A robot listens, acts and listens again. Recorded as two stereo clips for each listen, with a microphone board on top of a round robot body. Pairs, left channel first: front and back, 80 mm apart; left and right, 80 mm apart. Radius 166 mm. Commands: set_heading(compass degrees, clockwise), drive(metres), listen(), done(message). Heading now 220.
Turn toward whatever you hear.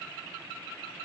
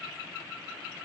listen()
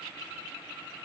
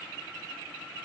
listen()
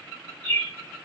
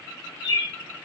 set_heading(155)
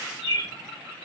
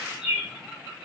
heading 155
set_heading(165)
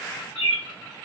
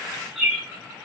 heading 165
done("Found it: a bird, straight ahead, under 1 m away.")